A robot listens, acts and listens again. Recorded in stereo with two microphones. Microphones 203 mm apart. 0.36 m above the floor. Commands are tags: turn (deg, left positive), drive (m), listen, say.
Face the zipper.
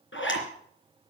<turn deg="90"/>
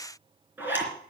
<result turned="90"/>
<turn deg="-10"/>
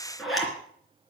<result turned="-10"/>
<say>Facing the zipper, 2 to 4 m away.</say>